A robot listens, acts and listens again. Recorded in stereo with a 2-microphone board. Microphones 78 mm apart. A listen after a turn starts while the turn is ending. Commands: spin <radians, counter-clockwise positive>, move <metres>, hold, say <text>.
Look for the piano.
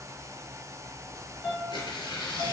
spin 0.79
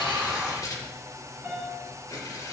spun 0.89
say Facing the piano.